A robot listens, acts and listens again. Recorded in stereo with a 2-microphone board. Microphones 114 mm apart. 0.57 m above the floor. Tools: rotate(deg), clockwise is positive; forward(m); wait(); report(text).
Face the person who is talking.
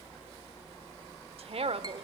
rotate(60)
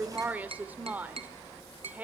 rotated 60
rotate(15)
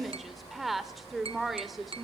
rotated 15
report("Found it: a woman speaking, straight ahead, 1 to 2 m away.")